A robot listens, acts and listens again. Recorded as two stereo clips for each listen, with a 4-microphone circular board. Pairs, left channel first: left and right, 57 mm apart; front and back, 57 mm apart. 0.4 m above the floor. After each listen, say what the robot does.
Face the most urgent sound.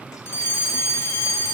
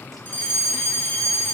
Turn 55° left.
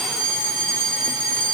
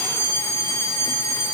Turn 15° left.
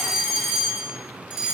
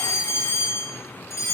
Found it: a fire alarm, straight ahead, 2 to 4 m away.